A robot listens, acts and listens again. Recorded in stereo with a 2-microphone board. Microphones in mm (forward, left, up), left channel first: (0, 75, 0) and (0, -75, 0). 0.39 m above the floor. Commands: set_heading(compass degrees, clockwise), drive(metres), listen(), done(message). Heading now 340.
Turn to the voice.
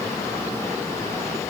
listen()
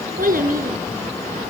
set_heading(50)
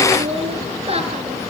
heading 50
set_heading(90)
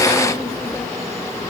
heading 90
listen()
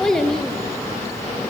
done("Found it: a child speaking, straight ahead.")